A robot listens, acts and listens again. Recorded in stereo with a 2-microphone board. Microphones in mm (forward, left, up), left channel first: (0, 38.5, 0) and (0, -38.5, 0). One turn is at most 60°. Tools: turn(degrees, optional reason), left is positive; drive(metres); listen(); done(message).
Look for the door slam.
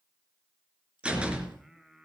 turn(degrees=-15, reason="The door slam: about 15° right or 165° right.")
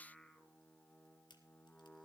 listen()
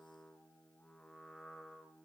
done("I heard a door slam, but can't make it out now. It was about straight ahead or 150° right.")